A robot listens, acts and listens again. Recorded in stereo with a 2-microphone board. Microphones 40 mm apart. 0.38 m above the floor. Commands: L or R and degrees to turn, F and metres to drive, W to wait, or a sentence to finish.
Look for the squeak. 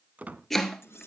R40
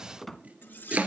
Found it: a squeak, straight ahead.